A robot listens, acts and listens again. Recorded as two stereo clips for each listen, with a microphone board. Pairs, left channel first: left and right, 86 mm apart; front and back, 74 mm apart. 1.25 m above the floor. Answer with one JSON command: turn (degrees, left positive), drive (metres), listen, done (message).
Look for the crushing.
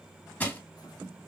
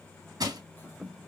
{"turn": 160}
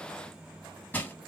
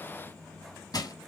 {"turn": 20}
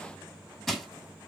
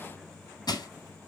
{"done": "Facing the crushing."}